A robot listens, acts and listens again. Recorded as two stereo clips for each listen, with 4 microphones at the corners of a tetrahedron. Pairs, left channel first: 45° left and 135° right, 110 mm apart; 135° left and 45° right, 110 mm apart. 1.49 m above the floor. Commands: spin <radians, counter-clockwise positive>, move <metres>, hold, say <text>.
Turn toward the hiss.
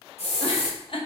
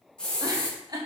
spin 0.96
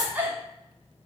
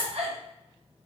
hold
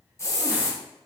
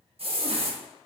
spin -0.26
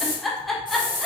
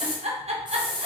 say Facing the hiss.